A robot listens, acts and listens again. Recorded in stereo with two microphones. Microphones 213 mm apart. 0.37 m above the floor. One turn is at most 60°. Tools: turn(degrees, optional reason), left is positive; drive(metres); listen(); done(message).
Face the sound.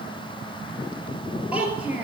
turn(degrees=-30)
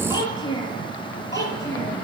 turn(degrees=15, reason="So it is at 15° left.")
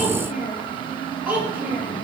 turn(degrees=-10, reason="The child speaking is now 10° right.")
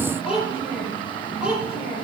done("Facing the child speaking.")